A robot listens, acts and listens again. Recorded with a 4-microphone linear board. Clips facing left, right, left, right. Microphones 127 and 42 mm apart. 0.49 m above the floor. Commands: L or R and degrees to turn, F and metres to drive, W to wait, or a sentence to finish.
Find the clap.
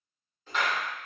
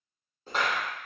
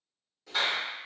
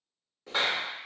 R35
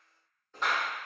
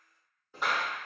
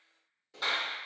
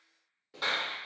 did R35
R10
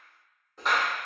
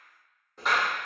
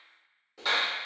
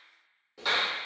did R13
Found it: a clap, straight ahead.